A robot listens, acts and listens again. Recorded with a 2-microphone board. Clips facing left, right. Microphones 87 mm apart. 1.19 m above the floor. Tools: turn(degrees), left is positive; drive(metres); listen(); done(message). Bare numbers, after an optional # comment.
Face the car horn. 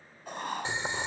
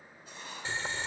listen()
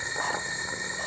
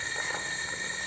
listen()
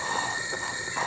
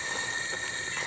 done("I can't make out a car horn, only boiling and writing.")